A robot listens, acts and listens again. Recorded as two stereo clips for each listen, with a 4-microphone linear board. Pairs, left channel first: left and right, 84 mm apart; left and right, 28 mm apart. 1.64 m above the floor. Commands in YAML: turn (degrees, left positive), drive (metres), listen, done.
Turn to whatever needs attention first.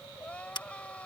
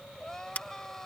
turn: 30
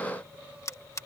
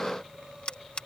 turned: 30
listen: true
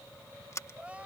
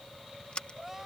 turn: -15
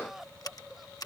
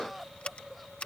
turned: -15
done: "Found it: crying, straight ahead."